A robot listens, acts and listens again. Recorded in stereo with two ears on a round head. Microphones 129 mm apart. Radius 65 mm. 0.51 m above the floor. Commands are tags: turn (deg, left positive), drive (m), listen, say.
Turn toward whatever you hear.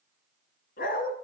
<turn deg="70"/>
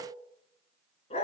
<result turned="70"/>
<turn deg="40"/>
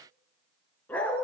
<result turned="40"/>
<turn deg="10"/>
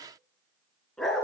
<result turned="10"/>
<say>Facing the dog barking, 2 to 4 m away.</say>